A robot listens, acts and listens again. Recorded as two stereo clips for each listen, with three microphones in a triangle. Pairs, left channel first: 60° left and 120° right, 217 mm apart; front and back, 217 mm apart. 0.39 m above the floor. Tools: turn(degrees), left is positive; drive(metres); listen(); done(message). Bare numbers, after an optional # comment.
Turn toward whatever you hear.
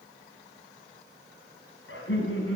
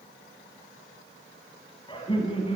# The laughter: 65° left.
turn(65)
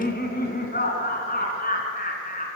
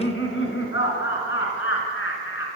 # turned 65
# The laughter is now 10° left.
turn(10)
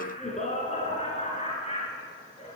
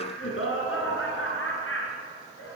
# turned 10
done("Facing the laughter, over 4 m away.")